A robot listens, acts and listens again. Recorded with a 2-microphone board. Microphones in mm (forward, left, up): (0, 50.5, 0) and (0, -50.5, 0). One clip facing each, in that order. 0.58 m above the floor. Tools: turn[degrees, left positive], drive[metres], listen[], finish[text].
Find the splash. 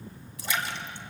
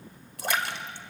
Thought: The splash: about 60° right or 120° right.
Action: turn[-60]
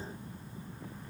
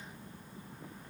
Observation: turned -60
Action: listen[]
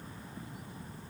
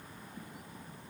Action: finish[I heard a splash, but can't make it out now. It was about straight ahead or 60° right.]